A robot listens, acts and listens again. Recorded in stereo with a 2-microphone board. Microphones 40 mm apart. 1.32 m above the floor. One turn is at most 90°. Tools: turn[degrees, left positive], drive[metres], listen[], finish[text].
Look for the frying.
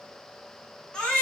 Action: listen[]
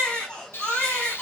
Thought: The frying: about 70° left or 110° left.
Action: turn[70]
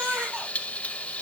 Thought: So it is at 35° left.
Action: turn[35]
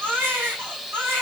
Action: finish[Facing the frying.]